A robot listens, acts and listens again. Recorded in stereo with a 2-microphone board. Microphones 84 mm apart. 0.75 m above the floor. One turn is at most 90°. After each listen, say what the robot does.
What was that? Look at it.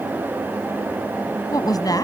Turn 50° left.
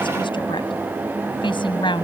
Turn 75° left.
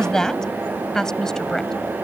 Found it: a woman speaking, straight ahead.